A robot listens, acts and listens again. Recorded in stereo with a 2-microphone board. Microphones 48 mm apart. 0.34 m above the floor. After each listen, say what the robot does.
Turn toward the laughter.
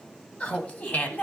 Turn 40° left.
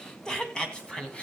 Turn 20° left.
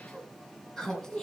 Turn 10° left.
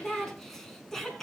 Found it: laughter, straight ahead, 2 to 4 m away.